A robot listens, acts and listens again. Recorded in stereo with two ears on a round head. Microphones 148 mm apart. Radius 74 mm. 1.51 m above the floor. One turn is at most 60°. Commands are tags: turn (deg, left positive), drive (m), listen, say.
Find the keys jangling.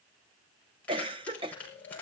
<turn deg="30"/>
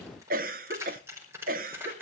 <turn deg="-15"/>
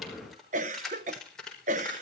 <say>Found it: keys jangling, straight ahead, over 4 m away.</say>